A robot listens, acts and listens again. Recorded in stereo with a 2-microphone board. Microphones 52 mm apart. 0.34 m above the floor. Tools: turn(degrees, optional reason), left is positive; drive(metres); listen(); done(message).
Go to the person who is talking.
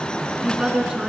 turn(degrees=-30)
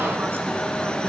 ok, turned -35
listen()
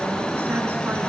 listen()
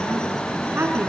turn(degrees=-130, reason="So it is at 130° right.")
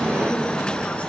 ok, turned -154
turn(degrees=25, reason="Nothing new. It was at 25° left.")
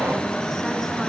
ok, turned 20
listen()
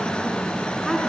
done("I heard a woman speaking from this way, but can't make it out now. I did not reach it.")